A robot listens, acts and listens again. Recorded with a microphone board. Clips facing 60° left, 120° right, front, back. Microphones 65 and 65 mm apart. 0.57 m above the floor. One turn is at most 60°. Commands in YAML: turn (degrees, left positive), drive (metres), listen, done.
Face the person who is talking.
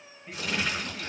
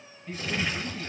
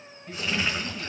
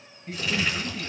turn: 60
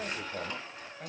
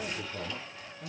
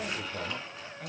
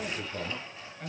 turn: 60
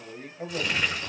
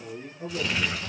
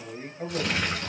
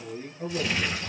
turn: 45
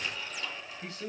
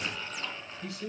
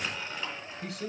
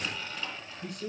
done: "Facing the man speaking."